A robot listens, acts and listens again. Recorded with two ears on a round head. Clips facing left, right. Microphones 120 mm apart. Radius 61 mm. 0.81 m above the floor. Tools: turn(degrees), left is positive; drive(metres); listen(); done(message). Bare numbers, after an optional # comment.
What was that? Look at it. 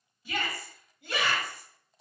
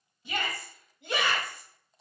# The shout: about 20° right or 160° right.
turn(-20)
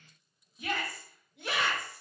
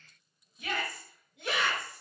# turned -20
done("Facing the shout.")